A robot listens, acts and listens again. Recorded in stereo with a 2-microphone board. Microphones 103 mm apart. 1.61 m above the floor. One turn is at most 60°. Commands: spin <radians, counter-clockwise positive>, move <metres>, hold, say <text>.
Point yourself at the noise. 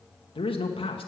spin 0.96
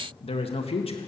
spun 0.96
spin 1.05
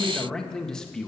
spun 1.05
say Found it: a man speaking, straight ahead.